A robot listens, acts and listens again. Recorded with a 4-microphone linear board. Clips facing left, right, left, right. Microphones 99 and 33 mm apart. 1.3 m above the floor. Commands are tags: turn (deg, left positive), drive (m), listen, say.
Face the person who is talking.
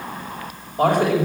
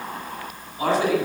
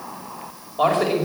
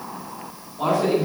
<turn deg="55"/>
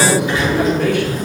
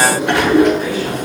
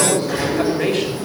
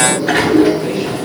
<turn deg="70"/>
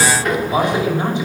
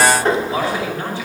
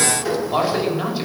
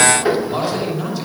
<turn deg="20"/>
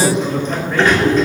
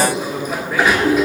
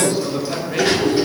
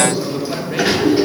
<say>Found it: a man speaking, straight ahead, over 4 m away.</say>